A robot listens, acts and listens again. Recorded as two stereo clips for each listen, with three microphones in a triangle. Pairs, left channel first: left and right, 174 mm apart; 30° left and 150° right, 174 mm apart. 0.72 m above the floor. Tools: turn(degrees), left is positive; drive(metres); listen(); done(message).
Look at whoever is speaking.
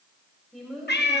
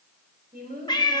turn(degrees=180)
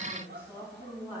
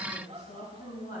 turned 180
turn(degrees=-10)
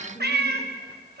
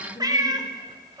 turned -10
done("Facing the woman speaking, over 4 m away.")